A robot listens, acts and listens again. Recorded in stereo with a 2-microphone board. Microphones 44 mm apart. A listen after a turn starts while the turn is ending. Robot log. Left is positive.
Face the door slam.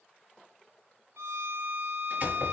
note: The door slam: about 45° right or 135° right.
cmd yaw -45
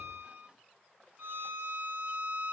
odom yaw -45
cmd idle
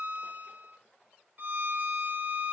end: I heard a door slam, but can't make it out now. It was about straight ahead or 90° right.